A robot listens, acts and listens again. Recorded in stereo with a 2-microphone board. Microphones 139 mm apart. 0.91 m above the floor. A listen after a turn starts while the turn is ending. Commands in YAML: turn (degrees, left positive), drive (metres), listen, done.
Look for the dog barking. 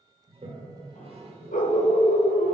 turn: 75
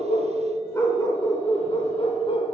turn: 45
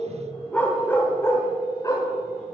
turn: 25
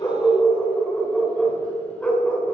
turn: 10
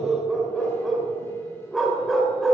done: "Found it: a dog barking, straight ahead."